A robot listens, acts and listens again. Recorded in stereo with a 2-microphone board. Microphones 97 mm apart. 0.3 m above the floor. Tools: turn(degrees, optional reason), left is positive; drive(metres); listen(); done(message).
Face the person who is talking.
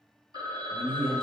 turn(degrees=-60, reason="The man speaking: about 60° right or 120° right.")
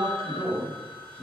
turn(degrees=-30, reason="So it is at 30° right.")
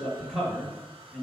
done("Facing the man speaking, 1 to 2 m away.")